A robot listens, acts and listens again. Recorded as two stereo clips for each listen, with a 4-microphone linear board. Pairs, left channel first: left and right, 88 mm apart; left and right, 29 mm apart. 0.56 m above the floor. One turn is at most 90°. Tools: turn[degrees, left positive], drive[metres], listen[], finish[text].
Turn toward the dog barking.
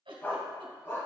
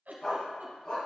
Thought: The dog barking: about 35° left or 145° left.
Action: turn[35]
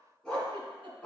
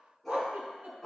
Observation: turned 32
Thought: So it is at 15° left.
Action: turn[15]
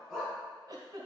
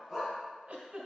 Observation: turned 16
Action: finish[Facing the dog barking, 2 to 4 m away.]